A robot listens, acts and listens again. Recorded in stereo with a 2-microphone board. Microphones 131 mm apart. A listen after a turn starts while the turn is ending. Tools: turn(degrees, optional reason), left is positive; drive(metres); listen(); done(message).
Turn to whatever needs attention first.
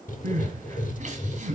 turn(degrees=-70, reason="The crying: about 70° right or 110° right.")
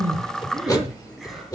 listen()
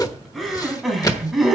done("Facing the crying, 2 to 4 m away.")